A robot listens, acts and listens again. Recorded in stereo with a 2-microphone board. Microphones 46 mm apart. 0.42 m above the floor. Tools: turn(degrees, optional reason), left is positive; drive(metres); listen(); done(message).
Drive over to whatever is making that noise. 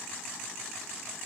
listen()
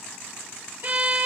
turn(degrees=-45, reason="The violin: about 45° right or 135° right.")
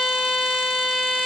drive(metres=1.0)
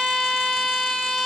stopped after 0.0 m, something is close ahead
done("Blocked. The violin is further on, straight ahead.")